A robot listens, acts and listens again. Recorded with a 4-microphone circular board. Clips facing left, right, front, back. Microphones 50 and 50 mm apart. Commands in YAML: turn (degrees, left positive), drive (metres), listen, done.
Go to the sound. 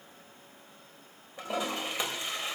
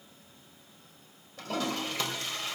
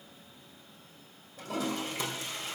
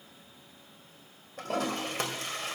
turn: 160
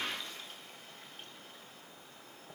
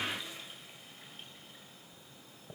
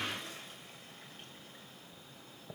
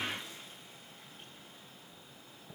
turn: -10
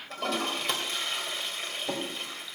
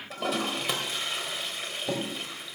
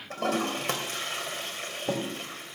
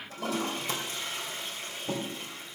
drive: 1.0
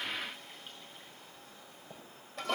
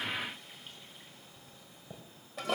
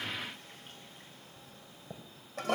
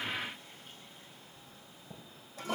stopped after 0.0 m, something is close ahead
done: "Something is in my way. I am facing the toilet flushing but have not reached it."